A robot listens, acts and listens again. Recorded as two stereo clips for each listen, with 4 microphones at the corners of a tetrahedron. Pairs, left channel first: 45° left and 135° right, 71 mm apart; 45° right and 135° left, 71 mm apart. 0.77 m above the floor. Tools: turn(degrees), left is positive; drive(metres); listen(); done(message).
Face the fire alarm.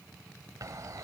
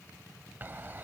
listen()
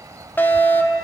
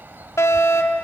turn(degrees=-10)
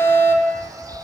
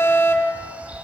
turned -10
done("Found it: a fire alarm, straight ahead.")